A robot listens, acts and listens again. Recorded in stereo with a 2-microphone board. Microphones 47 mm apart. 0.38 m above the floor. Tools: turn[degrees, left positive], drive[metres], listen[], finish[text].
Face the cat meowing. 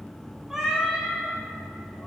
Action: turn[30]
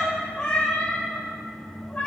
Thought: So it is at 140° left.
Action: turn[140]
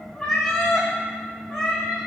Action: finish[Facing the cat meowing, over 4 m away.]